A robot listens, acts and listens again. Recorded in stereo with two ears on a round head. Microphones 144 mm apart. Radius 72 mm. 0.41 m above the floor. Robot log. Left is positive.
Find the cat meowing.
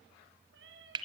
note: The cat meowing: about 75° right or 105° right.
cmd yaw -75
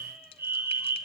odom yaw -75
cmd idle
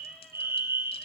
cmd idle
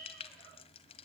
end: I heard a cat meowing, but can't make it out now. It was about straight ahead or 30° right.